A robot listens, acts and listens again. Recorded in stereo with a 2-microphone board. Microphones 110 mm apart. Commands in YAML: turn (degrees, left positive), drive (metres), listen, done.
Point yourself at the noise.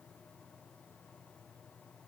listen: true
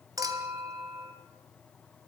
turn: -30
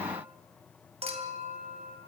turn: -115
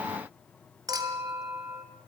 turn: -35
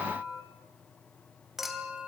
done: "Facing the clink."